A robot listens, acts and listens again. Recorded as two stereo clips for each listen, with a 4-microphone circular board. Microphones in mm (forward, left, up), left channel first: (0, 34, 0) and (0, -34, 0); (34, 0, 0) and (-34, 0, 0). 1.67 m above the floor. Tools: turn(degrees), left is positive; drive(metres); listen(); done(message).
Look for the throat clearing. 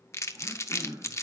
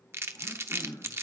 turn(degrees=-50)
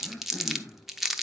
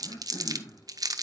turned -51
done("Found it: throat clearing, straight ahead.")